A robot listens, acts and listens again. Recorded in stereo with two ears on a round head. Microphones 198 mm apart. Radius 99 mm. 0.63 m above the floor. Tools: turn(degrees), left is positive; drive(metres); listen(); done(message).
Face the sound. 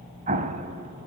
turn(degrees=-35)
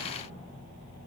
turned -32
listen()
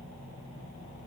done("I heard an explosion, but can't make it out now. It was about 5° right or 110° right.")